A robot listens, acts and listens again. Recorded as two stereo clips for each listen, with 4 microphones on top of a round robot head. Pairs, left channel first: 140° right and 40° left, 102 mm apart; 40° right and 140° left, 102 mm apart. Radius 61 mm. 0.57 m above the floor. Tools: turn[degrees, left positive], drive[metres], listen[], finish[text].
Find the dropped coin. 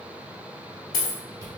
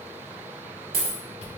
Thought: The dropped coin: 175° left.
Action: turn[175]
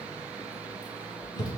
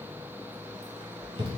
Action: finish[I heard a dropped coin from this way, but can't make it out now.]